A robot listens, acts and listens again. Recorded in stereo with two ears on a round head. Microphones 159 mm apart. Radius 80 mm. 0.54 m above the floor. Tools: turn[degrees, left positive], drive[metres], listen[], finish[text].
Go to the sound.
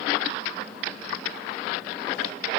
Action: listen[]
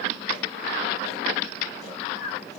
Thought: The snoring: about 35° left or 145° left.
Action: turn[35]
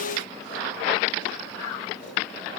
Action: listen[]
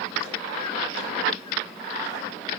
Action: listen[]
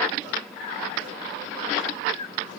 Thought: So it is at 100° left.
Action: turn[100]
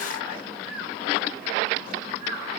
Thought: The snoring is now 10° right.
Action: turn[-10]
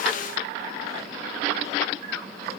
Action: listen[]
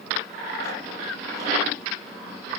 Action: listen[]
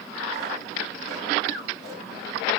Action: drive[1.0]
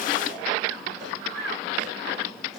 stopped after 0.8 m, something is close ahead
Action: finish[Arrived at the snoring, straight ahead.]